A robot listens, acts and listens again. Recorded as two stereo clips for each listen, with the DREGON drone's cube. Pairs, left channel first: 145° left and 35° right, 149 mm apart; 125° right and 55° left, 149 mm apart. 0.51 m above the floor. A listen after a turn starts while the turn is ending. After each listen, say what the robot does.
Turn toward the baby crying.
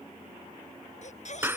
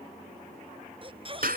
Turn 110° left.
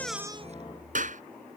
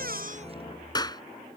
Keep listening.
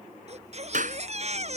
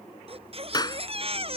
Found it: a baby crying, straight ahead.